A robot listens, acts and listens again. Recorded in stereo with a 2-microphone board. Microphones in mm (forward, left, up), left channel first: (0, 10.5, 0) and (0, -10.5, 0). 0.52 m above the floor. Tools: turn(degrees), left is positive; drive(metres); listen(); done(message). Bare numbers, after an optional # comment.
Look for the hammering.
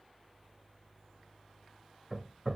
# The hammering: about 20° right or 160° right.
turn(-20)
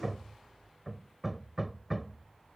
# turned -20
done("Facing the hammering.")